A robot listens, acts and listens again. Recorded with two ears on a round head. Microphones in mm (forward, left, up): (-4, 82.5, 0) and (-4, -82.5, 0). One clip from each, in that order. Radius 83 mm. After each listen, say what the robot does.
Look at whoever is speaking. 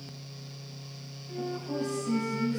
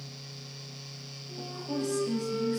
Turn 50° right.
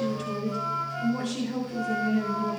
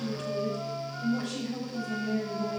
Facing the woman speaking, over 4 m away.